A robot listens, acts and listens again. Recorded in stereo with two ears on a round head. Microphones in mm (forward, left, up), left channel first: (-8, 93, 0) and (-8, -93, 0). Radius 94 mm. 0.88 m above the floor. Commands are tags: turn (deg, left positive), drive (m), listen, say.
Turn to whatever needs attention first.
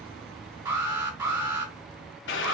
<turn deg="-20"/>
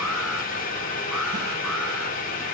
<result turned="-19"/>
<listen/>
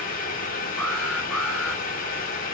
<say>Found it: an alarm, straight ahead, 2 to 4 m away.</say>